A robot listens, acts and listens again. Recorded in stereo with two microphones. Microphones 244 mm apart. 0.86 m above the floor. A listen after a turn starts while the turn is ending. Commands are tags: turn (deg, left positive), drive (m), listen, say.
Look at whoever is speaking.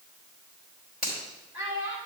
<turn deg="50"/>
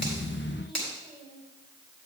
<listen/>
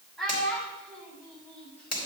<say>Facing the child speaking.</say>